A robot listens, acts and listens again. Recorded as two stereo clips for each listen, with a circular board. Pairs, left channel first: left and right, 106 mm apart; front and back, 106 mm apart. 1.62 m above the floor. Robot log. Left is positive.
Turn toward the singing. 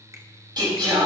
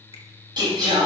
note: The singing: 130° right.
cmd yaw -130
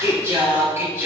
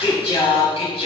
note: The singing is now 20° right.
cmd yaw -20
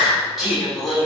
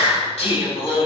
end: Facing the singing.